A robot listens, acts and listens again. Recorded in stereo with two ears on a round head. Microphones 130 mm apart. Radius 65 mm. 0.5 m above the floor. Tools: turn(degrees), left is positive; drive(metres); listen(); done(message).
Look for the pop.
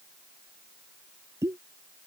turn(degrees=-20)
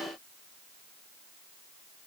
listen()
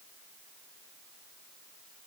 done("I heard a pop, but can't make it out now. It was about straight ahead or 140° right.")